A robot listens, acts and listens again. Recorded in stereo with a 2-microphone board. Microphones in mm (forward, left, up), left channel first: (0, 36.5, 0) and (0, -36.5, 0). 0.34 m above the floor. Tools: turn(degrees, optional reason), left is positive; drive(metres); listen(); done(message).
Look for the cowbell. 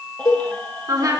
turn(degrees=60, reason="The cowbell: about 60° left or 120° left.")
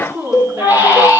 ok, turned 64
turn(degrees=55, reason="So it is at 55° left.")
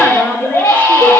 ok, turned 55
listen()
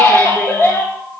listen()
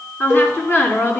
done("Facing the cowbell.")